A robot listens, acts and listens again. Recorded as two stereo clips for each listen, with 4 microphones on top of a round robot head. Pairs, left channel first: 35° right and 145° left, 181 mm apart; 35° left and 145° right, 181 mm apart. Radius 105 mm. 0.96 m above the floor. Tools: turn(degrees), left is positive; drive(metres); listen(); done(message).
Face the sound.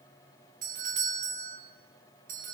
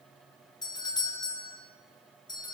turn(degrees=100)
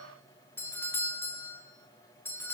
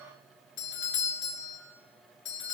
turn(degrees=40)
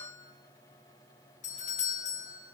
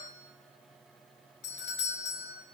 turn(degrees=15)
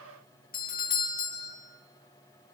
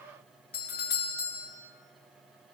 done("Facing the doorbell, 2 to 4 m away.")